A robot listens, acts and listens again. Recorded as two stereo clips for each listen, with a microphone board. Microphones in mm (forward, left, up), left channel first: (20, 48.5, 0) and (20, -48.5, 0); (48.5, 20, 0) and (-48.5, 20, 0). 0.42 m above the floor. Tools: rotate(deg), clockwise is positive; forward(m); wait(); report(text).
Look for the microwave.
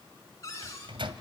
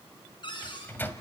rotate(65)
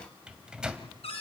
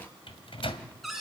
rotate(10)
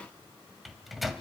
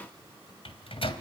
report("Facing the microwave, 1 to 2 m away.")